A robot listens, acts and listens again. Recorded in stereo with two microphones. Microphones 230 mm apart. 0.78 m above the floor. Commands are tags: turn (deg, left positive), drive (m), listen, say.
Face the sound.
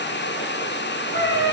<turn deg="55"/>
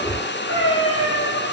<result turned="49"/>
<turn deg="75"/>
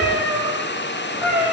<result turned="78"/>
<say>Facing the cat meowing.</say>